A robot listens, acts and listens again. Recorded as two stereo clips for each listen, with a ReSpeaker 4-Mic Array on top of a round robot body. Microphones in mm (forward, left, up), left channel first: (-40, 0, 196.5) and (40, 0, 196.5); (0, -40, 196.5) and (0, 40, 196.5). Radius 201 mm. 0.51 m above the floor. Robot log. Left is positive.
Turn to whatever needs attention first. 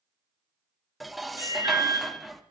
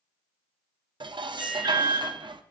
note: The alarm: 45° left.
cmd yaw +45
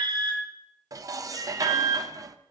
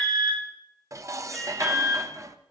end: Facing the alarm, over 4 m away.